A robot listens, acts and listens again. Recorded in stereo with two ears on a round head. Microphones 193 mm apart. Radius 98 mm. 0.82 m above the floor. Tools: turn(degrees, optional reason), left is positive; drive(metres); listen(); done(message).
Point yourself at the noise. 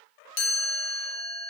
turn(degrees=65, reason="The chime: about 65° left or 115° left.")
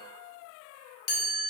turn(degrees=45, reason="So it is at 45° left.")
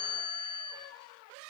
turn(degrees=20, reason="The chime is now 20° left.")
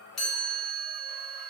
done("Facing the chime.")